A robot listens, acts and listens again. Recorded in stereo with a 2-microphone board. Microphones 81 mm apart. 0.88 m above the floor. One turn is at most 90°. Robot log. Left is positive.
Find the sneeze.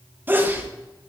note: The sneeze: about 25° right or 155° right.
cmd yaw -25
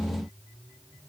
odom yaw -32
cmd idle
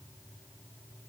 end: I heard a sneeze, but can't make it out now. It was about 5° left or 125° right.